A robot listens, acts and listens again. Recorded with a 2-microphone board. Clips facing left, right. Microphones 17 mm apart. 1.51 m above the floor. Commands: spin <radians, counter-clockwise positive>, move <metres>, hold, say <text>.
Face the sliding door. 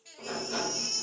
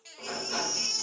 spin -0.44
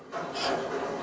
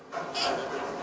say Facing the sliding door.